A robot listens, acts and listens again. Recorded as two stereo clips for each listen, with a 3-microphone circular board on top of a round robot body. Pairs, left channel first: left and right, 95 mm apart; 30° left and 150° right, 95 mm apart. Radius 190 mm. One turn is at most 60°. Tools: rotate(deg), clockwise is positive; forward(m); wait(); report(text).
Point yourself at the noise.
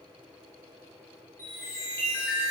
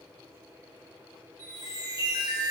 rotate(-60)
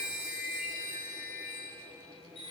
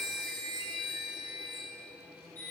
rotate(-60)
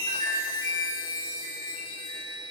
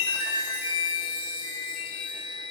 rotate(-55)
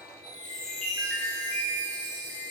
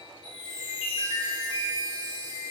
report("Facing the chime.")